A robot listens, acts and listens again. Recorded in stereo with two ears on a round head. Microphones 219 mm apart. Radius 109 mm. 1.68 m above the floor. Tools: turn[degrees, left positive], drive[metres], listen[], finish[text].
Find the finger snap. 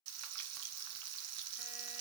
Action: listen[]
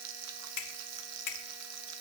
Action: turn[90]
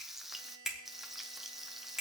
Action: finish[Facing the finger snap, 1 to 2 m away.]